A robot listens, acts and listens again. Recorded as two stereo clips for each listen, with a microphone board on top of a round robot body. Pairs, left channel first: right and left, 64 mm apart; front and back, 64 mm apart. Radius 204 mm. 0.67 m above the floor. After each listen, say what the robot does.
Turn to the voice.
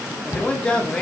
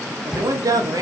Turn 165° right.
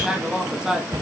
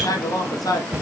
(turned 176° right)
Turn 10° left.
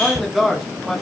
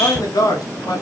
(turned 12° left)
Found it: a man speaking, straight ahead.